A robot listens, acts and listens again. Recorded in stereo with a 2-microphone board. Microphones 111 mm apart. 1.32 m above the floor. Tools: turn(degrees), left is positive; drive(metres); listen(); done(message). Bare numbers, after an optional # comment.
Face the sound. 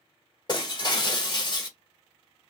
# The breaking glass: about 40° left or 140° left.
turn(40)
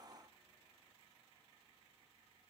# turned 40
listen()
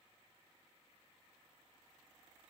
done("I heard breaking glass, but can't make it out now. It was about straight ahead or 100° left.")